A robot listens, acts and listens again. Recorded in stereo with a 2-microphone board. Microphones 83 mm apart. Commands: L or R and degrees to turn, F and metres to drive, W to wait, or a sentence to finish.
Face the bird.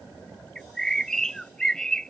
L30
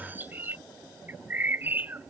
R20
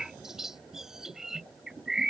Found it: a bird, straight ahead.